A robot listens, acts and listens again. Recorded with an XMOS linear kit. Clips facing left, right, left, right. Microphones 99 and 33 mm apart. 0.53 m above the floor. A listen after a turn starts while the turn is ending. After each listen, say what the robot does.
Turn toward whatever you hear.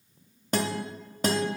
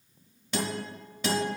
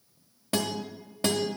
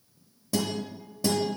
Turn 45° left.
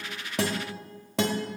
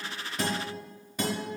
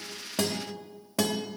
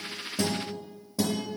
Turn 90° left.
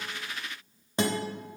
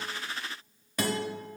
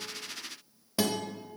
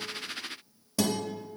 Turn 25° left.
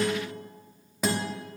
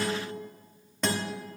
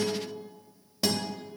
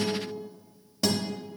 Facing the guitar.